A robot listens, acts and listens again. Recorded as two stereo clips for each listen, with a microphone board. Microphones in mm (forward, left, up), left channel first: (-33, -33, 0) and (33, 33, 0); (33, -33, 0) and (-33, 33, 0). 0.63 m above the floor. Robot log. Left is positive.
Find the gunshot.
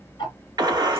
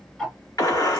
end: Facing the gunshot, 1 to 2 m away.